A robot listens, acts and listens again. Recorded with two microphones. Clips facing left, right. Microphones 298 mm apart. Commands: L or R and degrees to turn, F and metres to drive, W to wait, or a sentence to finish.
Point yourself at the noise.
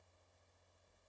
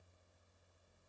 W
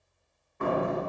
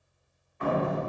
L55
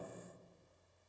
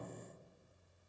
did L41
W
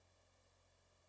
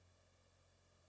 I heard a door slam, but can't make it out now. It was about 15° left or 85° left.